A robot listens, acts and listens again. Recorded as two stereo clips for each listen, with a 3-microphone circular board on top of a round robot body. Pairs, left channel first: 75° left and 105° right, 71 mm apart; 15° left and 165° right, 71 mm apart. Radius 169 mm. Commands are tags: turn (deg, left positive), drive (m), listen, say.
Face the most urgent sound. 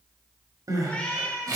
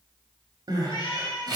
<turn deg="-140"/>
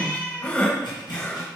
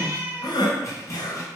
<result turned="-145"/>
<say>Found it: crying, straight ahead.</say>